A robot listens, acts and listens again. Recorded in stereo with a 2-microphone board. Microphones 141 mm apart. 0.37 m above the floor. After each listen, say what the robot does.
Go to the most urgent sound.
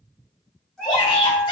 Turn 40° left.
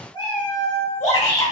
Turn 95° left.
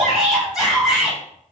Drive 1.0 m forward.
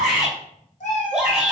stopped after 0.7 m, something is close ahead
Turn 10° right.
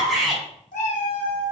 I am next to the shout.